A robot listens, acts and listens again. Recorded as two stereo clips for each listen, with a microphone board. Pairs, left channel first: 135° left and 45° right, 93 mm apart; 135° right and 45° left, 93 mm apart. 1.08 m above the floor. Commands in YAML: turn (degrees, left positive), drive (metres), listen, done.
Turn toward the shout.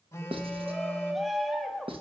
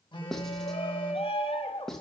turn: -135
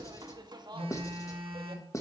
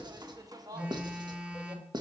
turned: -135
done: "Found it: a shout, straight ahead, 1 to 2 m away."